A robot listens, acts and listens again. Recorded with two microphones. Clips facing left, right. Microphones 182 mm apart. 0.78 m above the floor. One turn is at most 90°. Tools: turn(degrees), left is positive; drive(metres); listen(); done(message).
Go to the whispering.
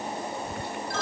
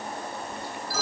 turn(degrees=65)
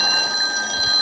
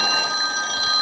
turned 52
listen()
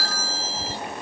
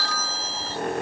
listen()
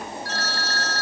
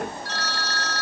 done("I heard whispering, but can't make it out now. It was about 10° left or 65° left. I did not reach it.")